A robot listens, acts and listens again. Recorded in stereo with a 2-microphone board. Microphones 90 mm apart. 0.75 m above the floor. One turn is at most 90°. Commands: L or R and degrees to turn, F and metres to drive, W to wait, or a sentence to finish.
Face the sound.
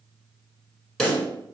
L30
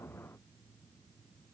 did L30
W
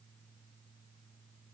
I heard a pop, but can't make it out now. It was about 25° right or 145° left.